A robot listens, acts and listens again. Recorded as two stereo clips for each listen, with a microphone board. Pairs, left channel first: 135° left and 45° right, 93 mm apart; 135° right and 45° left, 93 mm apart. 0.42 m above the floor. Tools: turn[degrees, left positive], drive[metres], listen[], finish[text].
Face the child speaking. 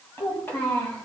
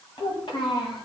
Thought: The child speaking: 150° right.
Action: turn[-150]
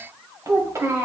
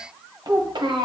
Thought: The child speaking is now 15° left.
Action: turn[15]
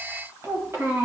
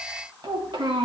Thought: The child speaking is now 20° left.
Action: turn[20]
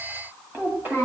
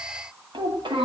Thought: The child speaking is now 25° left.
Action: turn[25]
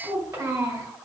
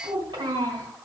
Action: finish[Facing the child speaking.]